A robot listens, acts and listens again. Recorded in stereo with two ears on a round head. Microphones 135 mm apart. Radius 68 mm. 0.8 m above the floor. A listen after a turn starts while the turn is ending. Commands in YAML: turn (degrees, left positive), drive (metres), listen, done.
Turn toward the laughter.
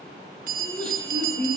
turn: 30
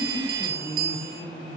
turn: 140
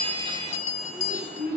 turn: 15
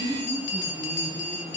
listen: true
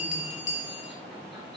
listen: true
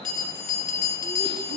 done: "I heard laughter from this way, but can't make it out now."